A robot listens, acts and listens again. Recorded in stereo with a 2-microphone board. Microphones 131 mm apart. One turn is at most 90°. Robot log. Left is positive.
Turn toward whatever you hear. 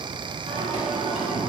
note: The singing: about 55° right or 125° right.
cmd yaw -55
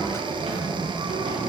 note: So it is at 65° right.
cmd yaw -65
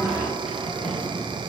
end: Facing the singing.